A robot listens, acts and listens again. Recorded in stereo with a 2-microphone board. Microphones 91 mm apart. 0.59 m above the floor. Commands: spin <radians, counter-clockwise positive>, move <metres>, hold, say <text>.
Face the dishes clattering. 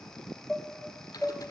spin 0.52
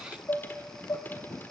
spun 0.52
spin 2.53
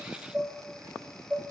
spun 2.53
spin -0.26
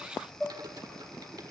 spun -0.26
say Found it: dishes clattering, straight ahead.